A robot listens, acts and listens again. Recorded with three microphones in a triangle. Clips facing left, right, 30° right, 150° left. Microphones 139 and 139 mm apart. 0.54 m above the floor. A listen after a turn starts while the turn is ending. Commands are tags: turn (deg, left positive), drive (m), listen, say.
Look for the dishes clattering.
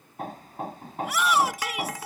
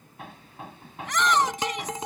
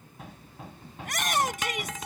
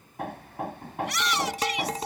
<turn deg="-155"/>
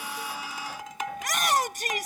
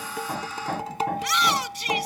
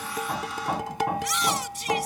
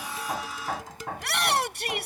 <turn deg="-35"/>
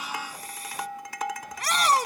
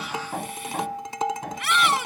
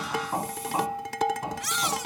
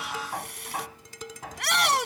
<turn deg="-25"/>
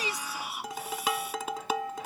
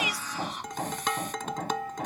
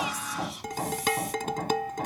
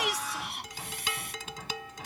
<say>Facing the dishes clattering.</say>